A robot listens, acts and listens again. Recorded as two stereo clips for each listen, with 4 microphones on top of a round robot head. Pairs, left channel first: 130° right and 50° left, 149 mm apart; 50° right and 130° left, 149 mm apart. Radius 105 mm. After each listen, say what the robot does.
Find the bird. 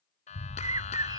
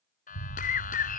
Turn 20° right.
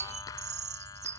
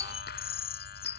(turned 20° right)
Facing the bird.